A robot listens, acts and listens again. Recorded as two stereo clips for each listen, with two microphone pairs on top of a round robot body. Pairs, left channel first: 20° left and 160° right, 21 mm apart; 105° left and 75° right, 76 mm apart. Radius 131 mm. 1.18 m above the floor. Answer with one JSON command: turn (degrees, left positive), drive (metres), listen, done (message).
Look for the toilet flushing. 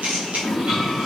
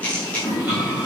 {"turn": -145}
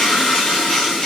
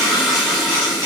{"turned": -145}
{"turn": 10}
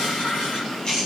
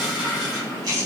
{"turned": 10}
{"done": "Found it: a toilet flushing, straight ahead, 1 to 2 m away."}